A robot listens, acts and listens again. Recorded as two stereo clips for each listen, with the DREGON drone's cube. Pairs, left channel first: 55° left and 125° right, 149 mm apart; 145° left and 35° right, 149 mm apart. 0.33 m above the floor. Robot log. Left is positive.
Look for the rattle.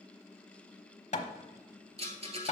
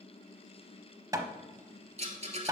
note: The rattle: 80° right.
cmd yaw -80
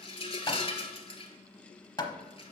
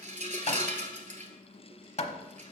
end: Found it: a rattle, straight ahead.